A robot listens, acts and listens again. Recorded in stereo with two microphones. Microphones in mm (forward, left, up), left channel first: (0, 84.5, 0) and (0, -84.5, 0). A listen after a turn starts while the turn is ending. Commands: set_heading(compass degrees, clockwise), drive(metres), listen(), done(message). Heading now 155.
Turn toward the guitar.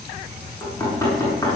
listen()
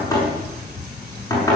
listen()
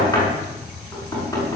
done("I can't make out a guitar, only knocking.")